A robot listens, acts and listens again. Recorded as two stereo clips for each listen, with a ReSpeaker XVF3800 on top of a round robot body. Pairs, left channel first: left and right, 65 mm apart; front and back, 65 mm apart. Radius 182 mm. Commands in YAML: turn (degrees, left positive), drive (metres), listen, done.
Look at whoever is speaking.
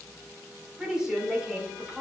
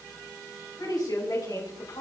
turn: -10
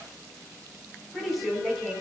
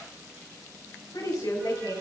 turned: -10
done: "Facing the woman speaking, over 4 m away."